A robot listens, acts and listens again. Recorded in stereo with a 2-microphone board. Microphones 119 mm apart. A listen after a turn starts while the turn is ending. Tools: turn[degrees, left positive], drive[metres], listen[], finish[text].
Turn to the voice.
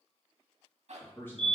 Thought: The man speaking: about 20° left or 160° left.
Action: turn[20]
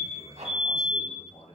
Thought: So it is at 120° left.
Action: turn[120]
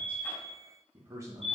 Thought: The man speaking is now 30° right.
Action: turn[-30]
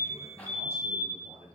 Thought: The man speaking is now 25° right.
Action: turn[-25]
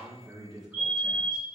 Action: finish[Found it: a man speaking, straight ahead, 2 to 4 m away.]